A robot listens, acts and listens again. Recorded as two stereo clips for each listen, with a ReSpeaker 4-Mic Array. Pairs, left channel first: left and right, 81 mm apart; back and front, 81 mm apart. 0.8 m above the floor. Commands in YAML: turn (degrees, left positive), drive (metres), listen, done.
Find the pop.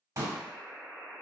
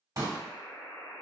turn: -45
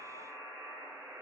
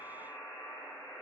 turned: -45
done: "Facing where the pop came from. I can't hear it now."